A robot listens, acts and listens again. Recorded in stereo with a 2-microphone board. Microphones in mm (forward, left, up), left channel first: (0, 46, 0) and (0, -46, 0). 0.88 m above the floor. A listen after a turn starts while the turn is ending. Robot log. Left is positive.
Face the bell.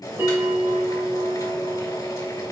note: The bell: about 30° right or 150° right.
cmd yaw -30
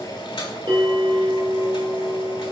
note: So it is at 120° right.
cmd yaw -120
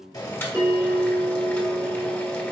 note: The bell is now 30° right.
cmd yaw -30
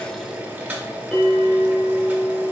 end: Facing the bell, 2 to 4 m away.